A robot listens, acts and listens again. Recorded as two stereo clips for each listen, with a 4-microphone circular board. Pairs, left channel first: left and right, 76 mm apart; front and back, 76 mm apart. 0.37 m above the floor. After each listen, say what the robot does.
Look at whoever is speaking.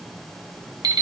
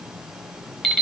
Keep listening.
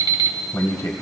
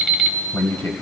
Turn 50° left.
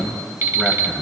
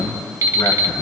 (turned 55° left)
Found it: a man speaking, straight ahead.